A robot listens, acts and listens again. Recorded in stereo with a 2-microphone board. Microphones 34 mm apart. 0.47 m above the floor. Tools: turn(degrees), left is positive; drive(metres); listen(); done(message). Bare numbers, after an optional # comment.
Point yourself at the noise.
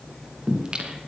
# The singing: about 25° right or 155° right.
turn(-25)
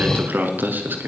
# So it is at 105° right.
turn(-105)
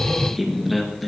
done("Found it: singing, straight ahead.")